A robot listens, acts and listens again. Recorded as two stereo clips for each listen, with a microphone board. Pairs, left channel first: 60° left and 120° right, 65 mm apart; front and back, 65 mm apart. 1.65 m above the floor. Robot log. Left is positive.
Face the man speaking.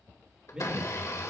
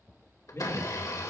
note: The man speaking: 45° right.
cmd yaw -45
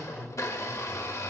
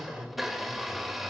note: The man speaking is now 25° left.
cmd yaw +25
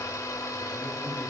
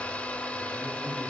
cmd idle
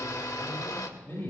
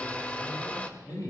end: Found it: a man speaking, straight ahead.